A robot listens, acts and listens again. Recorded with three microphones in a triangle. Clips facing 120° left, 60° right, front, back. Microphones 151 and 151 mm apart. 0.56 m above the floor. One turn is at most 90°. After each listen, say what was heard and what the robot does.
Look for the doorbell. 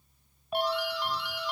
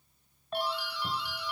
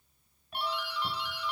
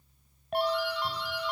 The doorbell: 135° left. Turn 90° left.
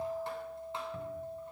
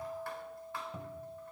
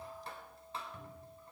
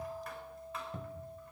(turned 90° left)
Nothing new. It was at 45° left. Turn 45° left.
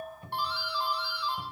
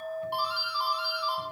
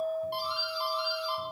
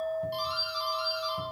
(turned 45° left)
The doorbell is now 15° left. Turn 15° left.
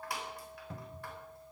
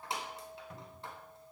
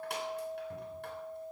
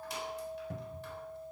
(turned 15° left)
Keep listening.
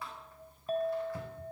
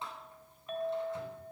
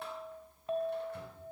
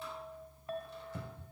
Keep listening.
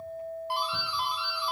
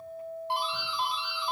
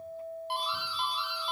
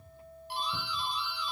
Found it: a doorbell, straight ahead, 2 to 4 m away.